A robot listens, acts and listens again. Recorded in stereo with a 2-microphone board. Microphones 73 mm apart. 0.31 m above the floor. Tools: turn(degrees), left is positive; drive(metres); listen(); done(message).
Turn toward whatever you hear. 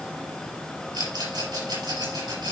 turn(degrees=-90)
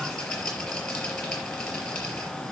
done("Facing the rattle.")